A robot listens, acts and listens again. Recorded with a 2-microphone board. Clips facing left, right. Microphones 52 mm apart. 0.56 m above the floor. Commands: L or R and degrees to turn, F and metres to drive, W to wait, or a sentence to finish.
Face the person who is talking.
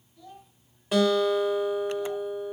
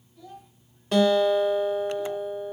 L30
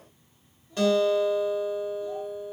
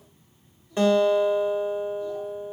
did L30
W
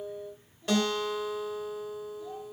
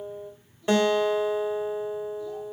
W
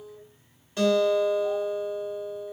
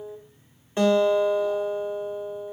I heard a child speaking, but can't make it out now. It was about 30° right or 150° left.